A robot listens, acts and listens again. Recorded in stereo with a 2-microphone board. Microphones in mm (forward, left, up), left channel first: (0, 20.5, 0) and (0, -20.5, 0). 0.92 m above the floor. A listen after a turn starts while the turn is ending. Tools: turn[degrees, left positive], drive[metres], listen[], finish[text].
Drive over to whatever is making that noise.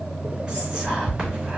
Thought: The whispering: about 20° right or 160° right.
Action: turn[-20]
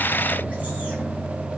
Action: listen[]
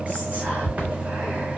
Thought: So it is at 145° right.
Action: turn[-145]
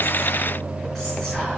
Action: drive[1.0]
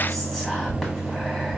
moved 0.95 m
Action: drive[1.0]
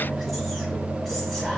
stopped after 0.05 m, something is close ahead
Action: listen[]
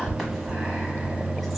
Action: finish[Arrived at the whispering, straight ahead.]